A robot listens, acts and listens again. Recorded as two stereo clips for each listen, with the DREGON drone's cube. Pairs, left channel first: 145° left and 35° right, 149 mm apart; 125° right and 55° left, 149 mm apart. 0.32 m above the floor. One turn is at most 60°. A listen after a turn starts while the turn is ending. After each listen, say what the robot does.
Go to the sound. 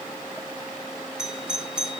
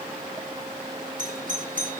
Turn 50° left.
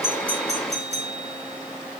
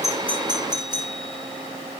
Drive 1.0 m forward.
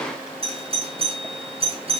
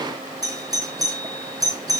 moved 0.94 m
Drive 1.0 m forward.
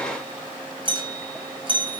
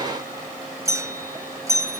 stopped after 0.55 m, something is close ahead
I am next to the doorbell.